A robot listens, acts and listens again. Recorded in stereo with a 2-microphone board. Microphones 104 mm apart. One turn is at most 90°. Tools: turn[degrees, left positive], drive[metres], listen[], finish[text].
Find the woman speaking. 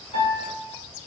Action: listen[]
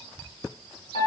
Action: listen[]
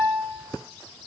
Action: finish[I can't make out a woman speaking to turn to.]